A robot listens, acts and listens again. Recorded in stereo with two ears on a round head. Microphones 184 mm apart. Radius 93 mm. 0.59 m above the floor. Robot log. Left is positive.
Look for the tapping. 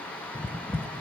cmd yaw +30
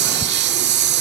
cmd idle
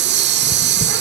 note: So it is at 140° left.
cmd yaw +140
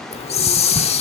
note: The tapping is now 15° right.
cmd yaw -15
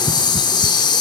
end: Found it: tapping, straight ahead, 1 to 2 m away.